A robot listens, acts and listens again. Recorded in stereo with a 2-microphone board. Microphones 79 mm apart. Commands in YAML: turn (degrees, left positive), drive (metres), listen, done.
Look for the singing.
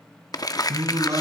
turn: -45
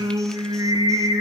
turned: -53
turn: -85
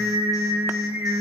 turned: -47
turn: -35
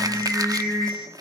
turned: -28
turn: -10
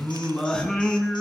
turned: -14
done: "Facing the singing, over 4 m away."